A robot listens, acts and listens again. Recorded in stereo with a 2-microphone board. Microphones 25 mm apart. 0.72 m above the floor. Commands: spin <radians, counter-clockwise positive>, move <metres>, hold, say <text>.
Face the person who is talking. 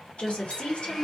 spin 0.96
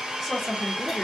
say Facing the woman speaking.